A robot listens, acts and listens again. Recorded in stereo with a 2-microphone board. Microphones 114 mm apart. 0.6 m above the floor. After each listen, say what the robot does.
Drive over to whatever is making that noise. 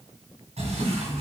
Turn 90° right.
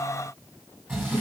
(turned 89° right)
Turn 15° right.
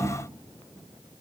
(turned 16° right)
Keep listening.
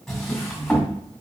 Drive 1.0 m forward.
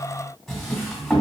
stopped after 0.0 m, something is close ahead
Something is in my way. I am facing the drawer but have not reached it.